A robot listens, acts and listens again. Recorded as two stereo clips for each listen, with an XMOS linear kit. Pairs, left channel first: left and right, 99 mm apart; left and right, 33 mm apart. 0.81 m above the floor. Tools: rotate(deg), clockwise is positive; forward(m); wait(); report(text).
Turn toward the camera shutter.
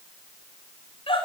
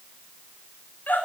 wait()
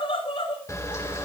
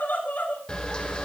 rotate(-30)
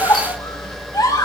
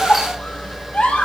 report("Found it: a camera shutter, straight ahead, 2 to 4 m away.")